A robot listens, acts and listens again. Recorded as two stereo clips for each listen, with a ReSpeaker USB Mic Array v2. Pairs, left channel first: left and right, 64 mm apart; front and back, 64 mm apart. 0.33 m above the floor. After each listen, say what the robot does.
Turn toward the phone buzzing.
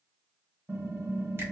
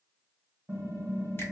Keep listening.
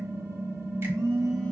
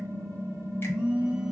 Turn 100° right.
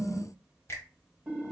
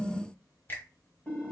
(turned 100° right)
Keep listening.
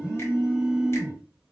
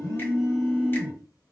Facing the phone buzzing.